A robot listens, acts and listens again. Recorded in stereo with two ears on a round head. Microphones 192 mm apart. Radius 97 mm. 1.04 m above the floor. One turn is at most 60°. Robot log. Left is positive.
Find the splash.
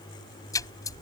note: The splash: about 15° left or 165° left.
cmd yaw +15
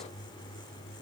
cmd idle
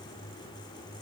end: I heard a splash, but can't make it out now. It was about straight ahead or 150° left.